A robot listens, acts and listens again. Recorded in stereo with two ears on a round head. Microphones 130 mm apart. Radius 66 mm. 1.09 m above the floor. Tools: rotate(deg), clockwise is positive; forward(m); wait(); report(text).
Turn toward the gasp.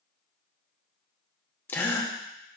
rotate(-15)
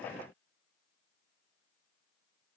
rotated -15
wait()
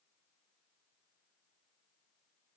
report("I heard a gasp, but can't make it out now. It was about straight ahead or 150° left.")